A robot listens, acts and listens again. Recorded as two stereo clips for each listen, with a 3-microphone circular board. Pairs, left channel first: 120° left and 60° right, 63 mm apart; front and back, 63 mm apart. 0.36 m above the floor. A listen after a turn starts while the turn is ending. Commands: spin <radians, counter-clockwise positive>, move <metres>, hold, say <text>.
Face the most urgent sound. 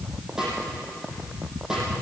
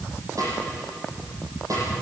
hold
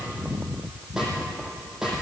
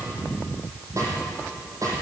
hold
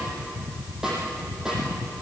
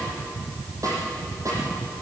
say I can't make out anything urgent to turn to.